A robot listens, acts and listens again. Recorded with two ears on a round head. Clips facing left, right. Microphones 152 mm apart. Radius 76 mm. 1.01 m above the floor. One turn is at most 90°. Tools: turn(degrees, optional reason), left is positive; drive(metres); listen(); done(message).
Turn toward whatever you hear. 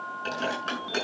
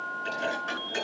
turn(degrees=90)
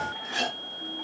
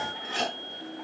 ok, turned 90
turn(degrees=10, reason="So it is at 10° left.")
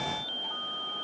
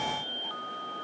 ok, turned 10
listen()
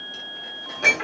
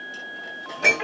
done("Found it: dishes clattering, straight ahead, over 4 m away.")